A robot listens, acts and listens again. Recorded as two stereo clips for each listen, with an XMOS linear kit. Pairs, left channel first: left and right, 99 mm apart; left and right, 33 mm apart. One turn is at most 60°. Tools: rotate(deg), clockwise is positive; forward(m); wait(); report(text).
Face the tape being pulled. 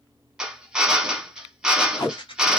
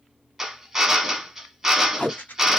rotate(-50)
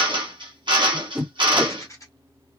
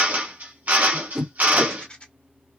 report("Facing the tape being pulled.")